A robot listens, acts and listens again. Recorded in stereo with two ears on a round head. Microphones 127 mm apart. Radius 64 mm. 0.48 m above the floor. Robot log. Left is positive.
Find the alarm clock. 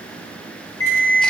note: The alarm clock: about 15° left or 165° left.
cmd yaw +15
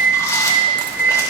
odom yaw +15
end: Found it: an alarm clock, straight ahead.